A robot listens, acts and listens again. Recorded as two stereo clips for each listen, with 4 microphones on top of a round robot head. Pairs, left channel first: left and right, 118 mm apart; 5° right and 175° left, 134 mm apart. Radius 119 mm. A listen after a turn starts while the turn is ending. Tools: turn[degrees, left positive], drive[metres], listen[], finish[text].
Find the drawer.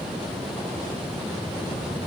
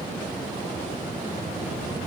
Action: listen[]
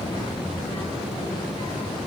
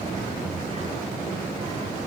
Action: listen[]
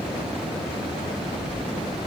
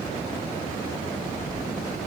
Action: finish[I can't make out a drawer, only a child speaking.]